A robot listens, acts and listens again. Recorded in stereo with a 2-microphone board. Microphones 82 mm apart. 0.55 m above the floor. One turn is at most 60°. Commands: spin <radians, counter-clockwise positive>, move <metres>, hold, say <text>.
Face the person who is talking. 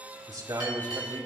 spin -0.96
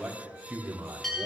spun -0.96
spin -0.44
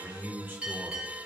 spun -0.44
spin -0.44
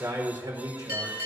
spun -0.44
spin -0.87
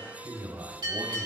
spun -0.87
spin -0.70
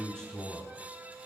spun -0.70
spin 0.17
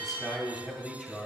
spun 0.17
say Facing the man speaking, 2 to 4 m away.